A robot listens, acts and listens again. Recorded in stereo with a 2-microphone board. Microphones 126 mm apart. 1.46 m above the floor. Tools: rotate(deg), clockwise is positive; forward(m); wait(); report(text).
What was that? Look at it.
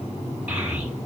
rotate(30)
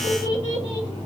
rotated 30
rotate(130)
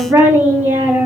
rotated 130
rotate(15)
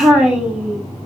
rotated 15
report("Facing the child speaking, 1 to 2 m away.")